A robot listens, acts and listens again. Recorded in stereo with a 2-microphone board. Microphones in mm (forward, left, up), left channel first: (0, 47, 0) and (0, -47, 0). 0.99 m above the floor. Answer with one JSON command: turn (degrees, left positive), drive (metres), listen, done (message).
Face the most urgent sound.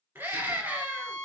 {"turn": -25}
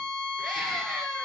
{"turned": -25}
{"done": "Found it: a scream, straight ahead."}